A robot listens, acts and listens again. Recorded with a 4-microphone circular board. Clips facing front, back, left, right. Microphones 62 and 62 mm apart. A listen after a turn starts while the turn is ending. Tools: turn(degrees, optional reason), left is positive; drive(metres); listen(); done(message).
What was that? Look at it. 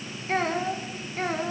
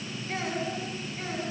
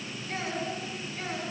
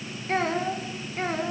turn(degrees=-35, reason="The child speaking: 35° right.")
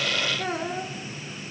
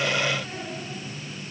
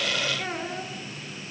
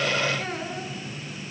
turn(degrees=10, reason="The child speaking is now 10° left.")
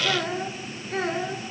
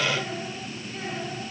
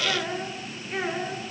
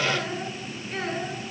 turn(degrees=15, reason="The child speaking is now 15° left.")
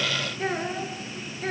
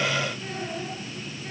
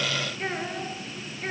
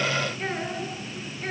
done("Found it: a child speaking, straight ahead.")